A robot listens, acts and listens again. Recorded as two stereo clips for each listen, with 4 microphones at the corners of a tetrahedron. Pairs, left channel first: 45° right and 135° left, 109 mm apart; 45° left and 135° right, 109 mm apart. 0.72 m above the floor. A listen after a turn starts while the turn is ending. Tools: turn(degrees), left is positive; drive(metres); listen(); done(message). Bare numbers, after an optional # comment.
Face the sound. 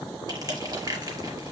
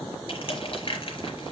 # The crushing: 80° left.
turn(80)
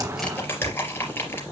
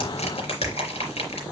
# The crushing is now 25° left.
turn(25)
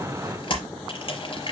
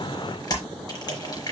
# The crushing is now 10° right.
turn(-10)
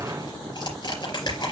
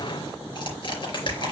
done("Found it: crushing, straight ahead, 2 to 4 m away.")